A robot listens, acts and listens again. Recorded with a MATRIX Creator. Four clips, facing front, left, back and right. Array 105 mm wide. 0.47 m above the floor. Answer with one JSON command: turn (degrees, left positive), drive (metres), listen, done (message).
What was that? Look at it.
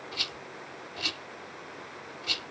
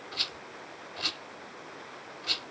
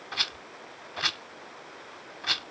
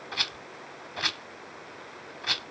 {"turn": -135}
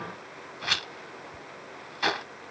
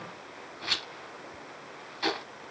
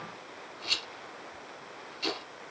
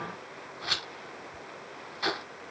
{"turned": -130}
{"done": "Found it: a rattle, straight ahead, under 1 m away."}